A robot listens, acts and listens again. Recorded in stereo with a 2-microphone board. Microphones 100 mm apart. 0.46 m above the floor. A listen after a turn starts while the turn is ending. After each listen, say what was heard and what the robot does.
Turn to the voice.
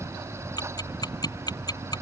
Keep listening.
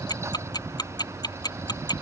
Keep listening.
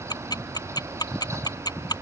I can't make out anyone speaking to turn to.